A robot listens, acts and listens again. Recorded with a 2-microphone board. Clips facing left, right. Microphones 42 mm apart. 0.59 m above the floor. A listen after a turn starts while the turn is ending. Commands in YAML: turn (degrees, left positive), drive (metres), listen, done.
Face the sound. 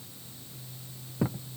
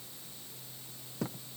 turn: 20
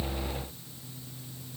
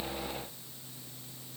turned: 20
listen: true
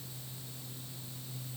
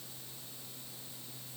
done: "I heard a thud, but can't make it out now. It was about straight ahead or 140° left."